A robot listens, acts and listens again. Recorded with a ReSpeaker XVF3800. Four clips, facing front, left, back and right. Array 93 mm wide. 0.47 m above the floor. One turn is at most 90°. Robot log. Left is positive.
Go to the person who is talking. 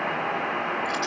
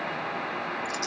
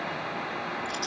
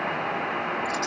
cmd idle
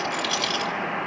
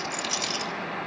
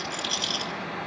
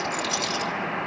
cmd idle
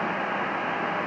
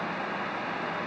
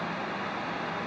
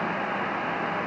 end: I can't make out anyone speaking to turn to.